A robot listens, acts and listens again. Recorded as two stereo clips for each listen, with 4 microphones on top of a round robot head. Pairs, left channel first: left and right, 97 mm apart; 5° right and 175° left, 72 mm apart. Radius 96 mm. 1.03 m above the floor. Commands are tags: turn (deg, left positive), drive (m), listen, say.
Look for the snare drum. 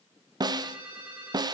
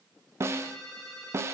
<turn deg="-135"/>
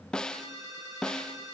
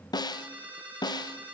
<turn deg="10"/>
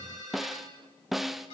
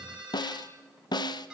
<say>Found it: a snare drum, straight ahead.</say>